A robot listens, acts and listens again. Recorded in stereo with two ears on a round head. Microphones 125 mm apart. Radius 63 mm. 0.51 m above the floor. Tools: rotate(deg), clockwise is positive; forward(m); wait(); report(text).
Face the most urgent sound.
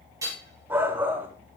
rotate(30)
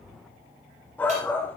rotate(-15)
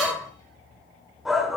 report("Found it: a shout, straight ahead.")